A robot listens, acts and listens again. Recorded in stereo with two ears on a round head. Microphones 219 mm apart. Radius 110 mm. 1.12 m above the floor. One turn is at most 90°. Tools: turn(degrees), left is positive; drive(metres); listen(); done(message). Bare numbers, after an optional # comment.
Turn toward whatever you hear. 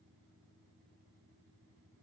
listen()
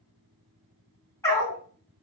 turn(30)
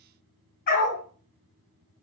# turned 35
# So it is at 135° left.
turn(90)
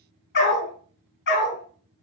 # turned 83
# The dog barking is now 55° left.
turn(55)
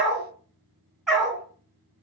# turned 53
done("Found it: a dog barking, straight ahead, 2 to 4 m away.")